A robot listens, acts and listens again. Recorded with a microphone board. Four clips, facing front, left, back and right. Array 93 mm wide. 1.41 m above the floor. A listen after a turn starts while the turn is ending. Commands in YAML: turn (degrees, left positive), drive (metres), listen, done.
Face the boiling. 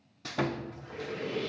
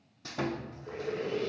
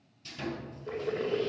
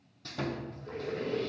turn: 175
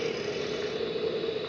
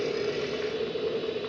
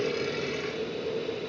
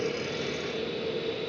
turn: 55
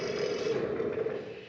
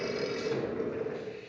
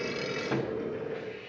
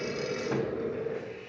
turn: 10
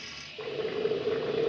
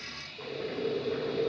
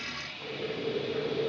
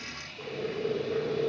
done: "Found it: boiling, straight ahead."